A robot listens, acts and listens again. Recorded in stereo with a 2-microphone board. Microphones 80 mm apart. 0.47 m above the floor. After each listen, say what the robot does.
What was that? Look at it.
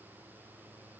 Keep listening.
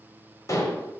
Turn 40° left.
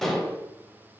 Found it: dishes clattering, straight ahead, 1 to 2 m away.